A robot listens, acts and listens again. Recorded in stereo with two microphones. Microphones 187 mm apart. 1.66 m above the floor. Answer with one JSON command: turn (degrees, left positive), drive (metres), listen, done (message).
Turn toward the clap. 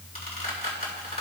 {"listen": true}
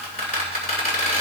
{"listen": true}
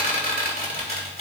{"done": "I can't make out a clap, only a squeak."}